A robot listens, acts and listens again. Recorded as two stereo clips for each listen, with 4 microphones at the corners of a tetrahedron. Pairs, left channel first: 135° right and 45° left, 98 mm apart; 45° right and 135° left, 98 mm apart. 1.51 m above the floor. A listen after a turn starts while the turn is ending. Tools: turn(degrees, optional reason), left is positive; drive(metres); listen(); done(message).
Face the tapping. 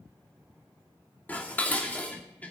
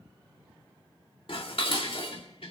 listen()
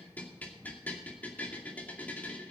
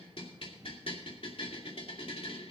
listen()
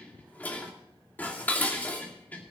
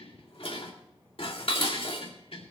done("I can't make out tapping to turn to.")